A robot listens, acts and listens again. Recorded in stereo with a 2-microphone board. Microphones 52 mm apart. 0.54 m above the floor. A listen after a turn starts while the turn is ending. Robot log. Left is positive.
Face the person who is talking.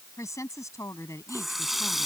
cmd yaw +90
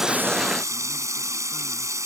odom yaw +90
cmd idle
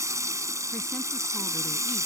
cmd idle
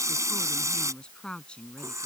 note: The woman speaking is now 20° left.
cmd yaw +20
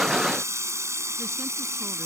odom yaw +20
cmd idle
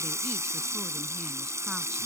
cmd idle
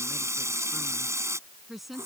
end: Facing the woman speaking.